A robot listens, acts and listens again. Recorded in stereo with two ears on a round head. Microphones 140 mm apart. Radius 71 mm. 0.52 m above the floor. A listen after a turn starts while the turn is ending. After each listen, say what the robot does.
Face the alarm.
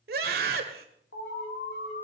Turn 65° left.
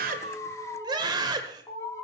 Turn 20° left.
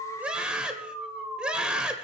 Found it: an alarm, straight ahead.